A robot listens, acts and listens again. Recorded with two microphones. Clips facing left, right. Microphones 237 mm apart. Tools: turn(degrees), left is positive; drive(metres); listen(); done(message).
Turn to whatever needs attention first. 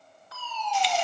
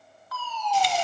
turn(degrees=25)
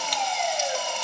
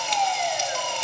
turn(degrees=130)
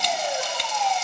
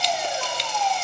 turn(degrees=45)
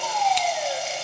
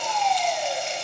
turn(degrees=10)
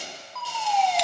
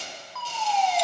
done("Found it: a fire alarm, straight ahead.")